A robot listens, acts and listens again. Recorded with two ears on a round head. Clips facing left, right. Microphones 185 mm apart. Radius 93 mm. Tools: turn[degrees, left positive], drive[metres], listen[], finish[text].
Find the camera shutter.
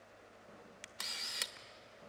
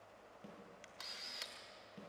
Thought: The camera shutter: about 70° left or 110° left.
Action: turn[70]
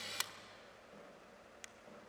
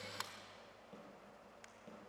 Thought: So it is at 40° left.
Action: turn[40]
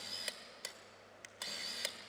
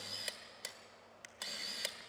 Action: finish[Facing the camera shutter.]